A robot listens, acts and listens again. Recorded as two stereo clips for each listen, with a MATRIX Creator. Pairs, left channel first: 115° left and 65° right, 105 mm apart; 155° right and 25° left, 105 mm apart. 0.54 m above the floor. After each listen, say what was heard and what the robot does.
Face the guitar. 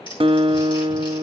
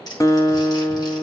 The guitar: 100° right. Turn 100° right.
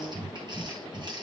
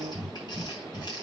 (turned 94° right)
Facing the guitar.